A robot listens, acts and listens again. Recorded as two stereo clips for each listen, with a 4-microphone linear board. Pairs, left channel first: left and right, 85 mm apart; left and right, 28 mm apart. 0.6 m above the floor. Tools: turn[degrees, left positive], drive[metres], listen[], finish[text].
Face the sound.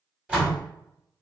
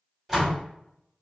Thought: The door slam: about 15° right or 165° right.
Action: turn[-15]
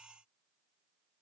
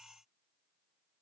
Action: listen[]
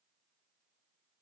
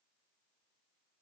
Action: finish[I heard a door slam, but can't make it out now. It was about straight ahead or 150° right.]